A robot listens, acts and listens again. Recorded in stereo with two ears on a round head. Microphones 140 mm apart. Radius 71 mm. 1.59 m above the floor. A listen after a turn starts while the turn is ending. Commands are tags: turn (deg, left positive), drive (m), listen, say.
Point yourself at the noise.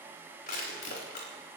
<turn deg="65"/>
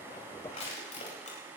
<turn deg="45"/>
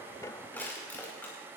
<turn deg="10"/>
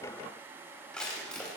<say>Facing the crushing, over 4 m away.</say>